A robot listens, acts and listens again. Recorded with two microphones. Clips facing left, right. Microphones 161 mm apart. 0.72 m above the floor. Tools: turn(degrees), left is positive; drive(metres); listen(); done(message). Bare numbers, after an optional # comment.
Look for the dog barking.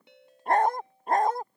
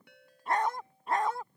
# The dog barking: about 45° left or 135° left.
turn(45)
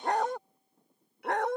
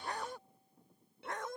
# So it is at 105° left.
turn(105)
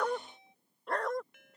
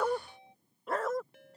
done("Found it: a dog barking, straight ahead.")